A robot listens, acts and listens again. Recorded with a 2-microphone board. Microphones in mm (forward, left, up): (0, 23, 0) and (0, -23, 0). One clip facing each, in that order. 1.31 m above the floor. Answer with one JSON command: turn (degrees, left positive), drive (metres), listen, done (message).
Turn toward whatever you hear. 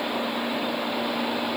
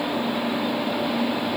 {"listen": true}
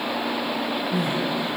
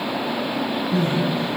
{"turn": 30}
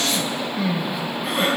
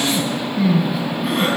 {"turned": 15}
{"done": "Found it: crying, straight ahead."}